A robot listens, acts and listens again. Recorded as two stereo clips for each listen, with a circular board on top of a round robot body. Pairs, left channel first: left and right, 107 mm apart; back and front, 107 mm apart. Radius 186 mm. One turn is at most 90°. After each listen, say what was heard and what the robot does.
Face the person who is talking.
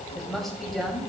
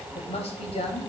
The woman speaking: 175° left. Turn 90° left.
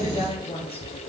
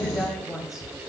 The woman speaking is now 90° left. Turn 90° left.
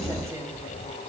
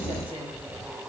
Keep listening.
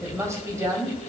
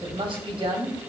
The woman speaking is now 30° right. Turn 30° right.
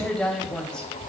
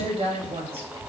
Found it: a woman speaking, straight ahead.